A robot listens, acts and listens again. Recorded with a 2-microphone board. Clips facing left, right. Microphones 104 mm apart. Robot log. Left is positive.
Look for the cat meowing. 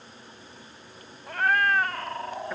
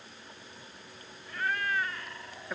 note: The cat meowing: about 55° left or 125° left.
cmd yaw +55
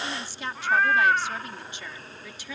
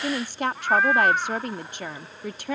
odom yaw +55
end: Facing the cat meowing.